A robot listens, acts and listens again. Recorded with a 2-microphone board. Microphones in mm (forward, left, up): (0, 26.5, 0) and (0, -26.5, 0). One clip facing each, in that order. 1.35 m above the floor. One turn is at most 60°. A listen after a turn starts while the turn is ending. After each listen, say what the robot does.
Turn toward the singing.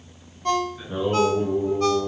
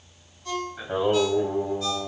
Turn 60° right.
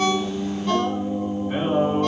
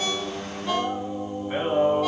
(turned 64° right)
Found it: singing, straight ahead, over 4 m away.